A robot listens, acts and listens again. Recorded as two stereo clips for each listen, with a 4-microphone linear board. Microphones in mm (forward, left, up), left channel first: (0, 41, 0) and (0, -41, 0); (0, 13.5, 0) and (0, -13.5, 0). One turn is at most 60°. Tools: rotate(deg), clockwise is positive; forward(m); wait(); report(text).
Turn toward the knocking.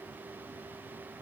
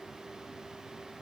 wait()
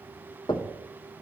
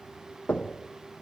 rotate(-60)
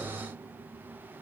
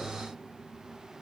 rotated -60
wait()
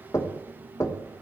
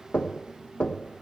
rotate(-40)
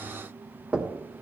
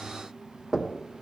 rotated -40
rotate(15)
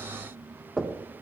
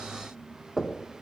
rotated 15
report("Found it: knocking, straight ahead.")